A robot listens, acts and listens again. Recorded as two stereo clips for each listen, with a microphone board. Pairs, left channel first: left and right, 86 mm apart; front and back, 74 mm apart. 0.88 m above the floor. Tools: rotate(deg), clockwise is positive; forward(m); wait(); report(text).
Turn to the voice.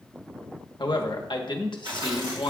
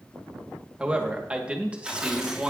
rotate(-105)
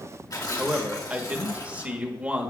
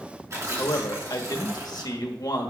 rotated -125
rotate(15)
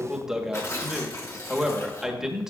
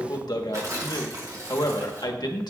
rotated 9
report("Facing the man speaking.")